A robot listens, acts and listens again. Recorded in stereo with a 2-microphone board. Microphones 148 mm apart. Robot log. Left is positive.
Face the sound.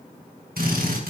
cmd yaw -90
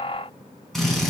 end: Found it: a drill, straight ahead.